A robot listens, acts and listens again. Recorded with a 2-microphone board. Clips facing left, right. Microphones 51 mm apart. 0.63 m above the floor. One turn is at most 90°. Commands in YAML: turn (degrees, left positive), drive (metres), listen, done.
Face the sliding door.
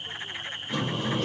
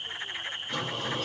turn: 30
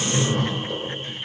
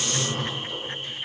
turn: 90
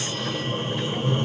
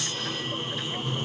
turn: 55
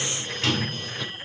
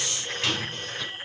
done: "Found it: a sliding door, straight ahead, 2 to 4 m away."